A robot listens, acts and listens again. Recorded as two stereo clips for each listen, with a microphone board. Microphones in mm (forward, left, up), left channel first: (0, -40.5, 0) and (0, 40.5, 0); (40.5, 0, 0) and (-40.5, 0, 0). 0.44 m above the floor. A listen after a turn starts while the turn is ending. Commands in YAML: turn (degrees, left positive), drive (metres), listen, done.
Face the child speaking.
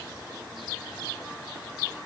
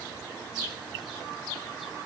listen: true
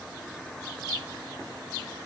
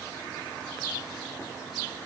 listen: true
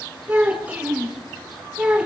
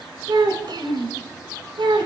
turn: 165
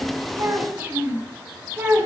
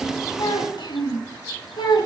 turn: 25
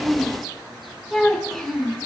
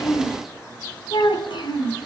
done: "Found it: a child speaking, straight ahead, 2 to 4 m away."